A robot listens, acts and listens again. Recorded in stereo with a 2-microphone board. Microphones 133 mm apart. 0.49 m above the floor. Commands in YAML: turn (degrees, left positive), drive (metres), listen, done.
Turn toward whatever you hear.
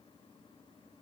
listen: true
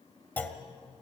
turn: 30
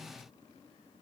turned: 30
listen: true
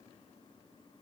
done: "I heard a clunk, but can't make it out now. It was about 15° right or 135° left."